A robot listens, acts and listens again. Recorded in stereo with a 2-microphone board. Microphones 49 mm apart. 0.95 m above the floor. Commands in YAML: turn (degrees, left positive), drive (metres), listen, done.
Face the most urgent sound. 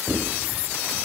listen: true
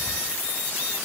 listen: true
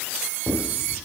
done: "I can't make out anything urgent to turn to."